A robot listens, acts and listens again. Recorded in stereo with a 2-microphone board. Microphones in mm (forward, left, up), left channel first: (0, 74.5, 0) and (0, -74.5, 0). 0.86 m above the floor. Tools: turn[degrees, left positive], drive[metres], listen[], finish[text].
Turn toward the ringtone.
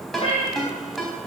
Action: turn[30]
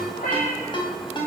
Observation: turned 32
Thought: So it is at 145° left.
Action: turn[145]
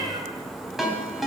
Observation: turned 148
Action: finish[Found it: a ringtone, straight ahead, 2 to 4 m away.]